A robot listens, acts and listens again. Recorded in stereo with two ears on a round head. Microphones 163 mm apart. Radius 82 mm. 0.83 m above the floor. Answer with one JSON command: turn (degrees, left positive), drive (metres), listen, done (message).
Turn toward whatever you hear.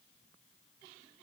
{"listen": true}
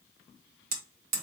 {"turn": -55}
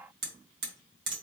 {"turn": -70}
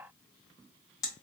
{"turn": 20}
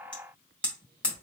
{"done": "Found it: hammering, straight ahead, 1 to 2 m away."}